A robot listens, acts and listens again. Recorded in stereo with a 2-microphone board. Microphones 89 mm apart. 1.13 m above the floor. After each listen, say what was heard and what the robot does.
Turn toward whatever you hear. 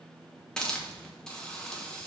Turn 30° left.
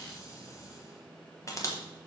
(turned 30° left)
So it is at 145° left. Turn 145° left.
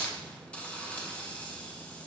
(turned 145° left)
The hiss is now 15° left. Turn 15° left.
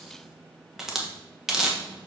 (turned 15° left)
Found it: a hiss, straight ahead, 1 to 2 m away.